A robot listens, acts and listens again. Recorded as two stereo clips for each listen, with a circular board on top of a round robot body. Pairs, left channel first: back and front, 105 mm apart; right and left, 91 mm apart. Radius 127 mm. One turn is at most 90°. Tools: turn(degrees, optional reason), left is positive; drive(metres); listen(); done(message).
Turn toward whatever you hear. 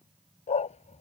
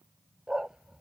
turn(degrees=90, reason="The dog barking: 175° left.")
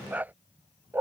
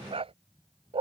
turn(degrees=70, reason="The dog barking is now 70° left.")
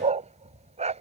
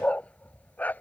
turn(degrees=-15, reason="The dog barking is now 15° right.")
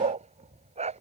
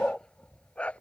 turn(degrees=-15, reason="The dog barking is now 15° right.")
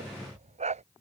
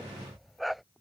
done("Found it: a dog barking, straight ahead.")